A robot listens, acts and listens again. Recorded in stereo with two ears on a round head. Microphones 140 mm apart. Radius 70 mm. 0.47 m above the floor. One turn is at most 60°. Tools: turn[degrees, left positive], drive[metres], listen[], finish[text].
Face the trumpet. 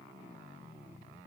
Action: listen[]
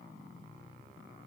Action: listen[]
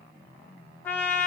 Action: turn[30]
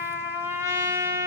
Thought: So it is at 15° right.
Action: turn[-15]
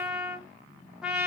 Action: finish[Facing the trumpet, 1 to 2 m away.]